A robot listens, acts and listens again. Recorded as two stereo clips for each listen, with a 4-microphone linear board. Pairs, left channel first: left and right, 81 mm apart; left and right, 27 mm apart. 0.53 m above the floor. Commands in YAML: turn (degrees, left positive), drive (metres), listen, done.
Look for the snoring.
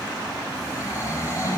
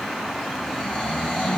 turn: 40
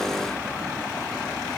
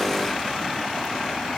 listen: true
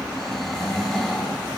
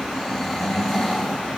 done: "Facing the snoring, over 4 m away."